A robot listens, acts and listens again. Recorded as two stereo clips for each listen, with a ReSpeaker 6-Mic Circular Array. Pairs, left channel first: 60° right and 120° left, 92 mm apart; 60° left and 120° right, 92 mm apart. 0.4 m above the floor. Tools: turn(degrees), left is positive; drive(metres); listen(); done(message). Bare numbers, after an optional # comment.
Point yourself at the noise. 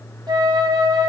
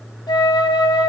# The flute: 85° left.
turn(85)
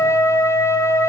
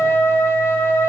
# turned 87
done("Found it: a flute, straight ahead.")